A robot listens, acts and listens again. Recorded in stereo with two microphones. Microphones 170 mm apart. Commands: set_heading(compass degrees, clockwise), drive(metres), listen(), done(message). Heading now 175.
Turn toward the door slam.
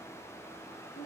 listen()
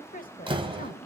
set_heading(205)
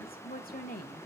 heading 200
listen()
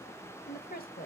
done("I heard a door slam, but can't make it out now. It was about 5° right or 125° right.")